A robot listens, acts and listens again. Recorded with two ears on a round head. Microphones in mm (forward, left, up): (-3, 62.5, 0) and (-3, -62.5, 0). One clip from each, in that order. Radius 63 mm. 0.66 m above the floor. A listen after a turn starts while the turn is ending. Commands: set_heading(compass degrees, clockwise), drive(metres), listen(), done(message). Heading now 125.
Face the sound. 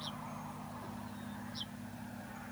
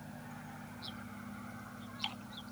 listen()
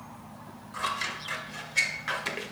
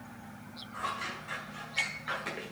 set_heading(55)
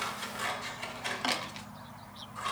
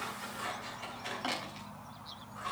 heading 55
set_heading(25)
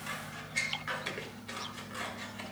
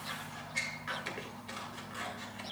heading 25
done("Found it: scissors, straight ahead, 2 to 4 m away.")